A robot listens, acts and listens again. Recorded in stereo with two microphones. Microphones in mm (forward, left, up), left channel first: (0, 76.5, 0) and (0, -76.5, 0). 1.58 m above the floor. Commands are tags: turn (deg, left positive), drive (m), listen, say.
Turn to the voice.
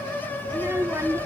<turn deg="-20"/>
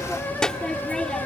<say>Facing the child speaking.</say>